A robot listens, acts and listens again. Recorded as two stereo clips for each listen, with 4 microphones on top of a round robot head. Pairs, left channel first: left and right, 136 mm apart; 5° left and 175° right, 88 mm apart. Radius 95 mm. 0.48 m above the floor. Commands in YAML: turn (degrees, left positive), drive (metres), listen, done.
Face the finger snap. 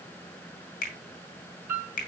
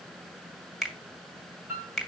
turn: 90
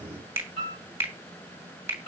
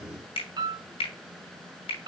turn: -20
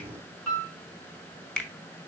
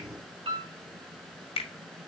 done: "Found it: a finger snap, straight ahead."